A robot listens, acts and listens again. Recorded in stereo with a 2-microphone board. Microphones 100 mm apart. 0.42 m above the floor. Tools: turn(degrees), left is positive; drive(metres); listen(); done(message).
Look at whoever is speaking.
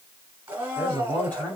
turn(degrees=30)
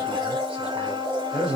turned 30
turn(degrees=-15)
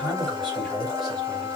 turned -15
done("Facing the man speaking, 2 to 4 m away.")